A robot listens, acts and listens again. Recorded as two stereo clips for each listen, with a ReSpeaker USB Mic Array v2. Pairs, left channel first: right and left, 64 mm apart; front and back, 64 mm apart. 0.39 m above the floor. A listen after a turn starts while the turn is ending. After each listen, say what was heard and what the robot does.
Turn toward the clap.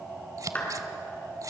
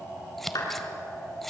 The clap: 25° right. Turn 25° right.
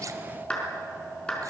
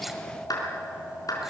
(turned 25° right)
The clap is now 15° right. Turn 15° right.
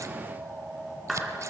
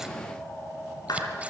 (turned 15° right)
Facing the clap, over 4 m away.